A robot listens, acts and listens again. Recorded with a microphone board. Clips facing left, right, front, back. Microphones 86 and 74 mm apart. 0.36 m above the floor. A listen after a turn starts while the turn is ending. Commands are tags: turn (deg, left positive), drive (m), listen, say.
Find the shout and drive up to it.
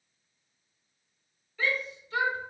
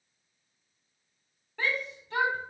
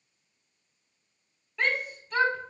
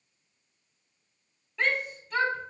<turn deg="-90"/>
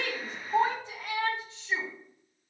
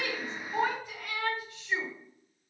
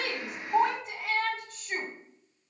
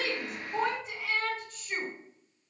<turn deg="25"/>
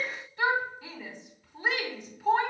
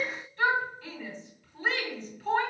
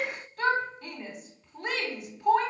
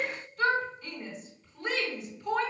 <turn deg="15"/>
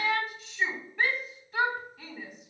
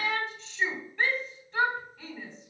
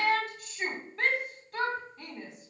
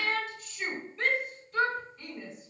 <drive m="1.0"/>
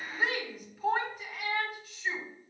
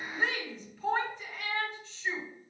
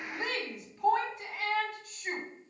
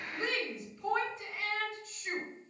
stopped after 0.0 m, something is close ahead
<say>Something is in my way. I am facing the shout but have not reached it.</say>